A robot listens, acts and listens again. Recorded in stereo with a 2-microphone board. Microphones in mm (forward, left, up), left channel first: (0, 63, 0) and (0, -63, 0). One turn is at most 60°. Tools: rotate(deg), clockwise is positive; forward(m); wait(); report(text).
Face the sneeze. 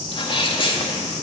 rotate(-40)
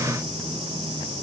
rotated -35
wait()
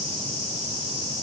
report("I heard a sneeze, but can't make it out now. It was about 5° left or 105° left.")